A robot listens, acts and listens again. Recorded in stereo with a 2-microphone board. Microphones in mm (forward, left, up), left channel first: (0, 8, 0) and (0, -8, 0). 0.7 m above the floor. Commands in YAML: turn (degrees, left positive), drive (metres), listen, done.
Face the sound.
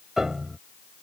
turn: -30
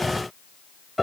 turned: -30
done: "Found it: a piano, straight ahead."